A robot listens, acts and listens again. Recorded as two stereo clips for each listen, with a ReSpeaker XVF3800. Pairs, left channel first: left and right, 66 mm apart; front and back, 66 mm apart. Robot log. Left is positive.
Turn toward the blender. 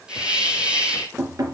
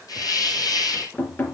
cmd idle
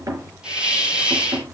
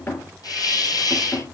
cmd idle
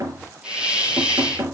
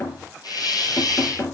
end: I can't make out a blender, only knocking and a hiss.